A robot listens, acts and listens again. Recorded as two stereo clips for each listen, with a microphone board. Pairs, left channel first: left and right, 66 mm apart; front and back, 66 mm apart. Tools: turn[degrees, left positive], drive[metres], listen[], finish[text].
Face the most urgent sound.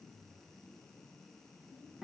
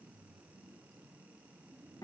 Action: listen[]
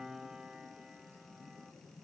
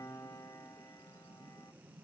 Action: listen[]
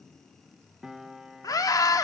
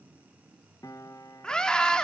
Thought: The scream: 80° left.
Action: turn[80]
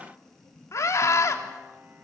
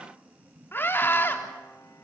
Thought: The scream is now 55° left.
Action: turn[55]
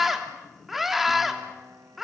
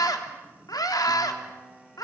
Action: finish[Found it: a scream, straight ahead.]